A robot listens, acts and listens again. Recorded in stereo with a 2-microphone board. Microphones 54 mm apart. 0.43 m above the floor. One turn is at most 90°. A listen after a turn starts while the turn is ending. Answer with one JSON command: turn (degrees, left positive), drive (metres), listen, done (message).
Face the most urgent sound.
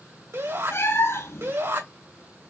{"turn": -60}
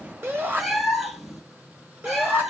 {"turn": -40}
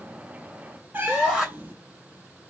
{"done": "Found it: a shout, straight ahead, 2 to 4 m away."}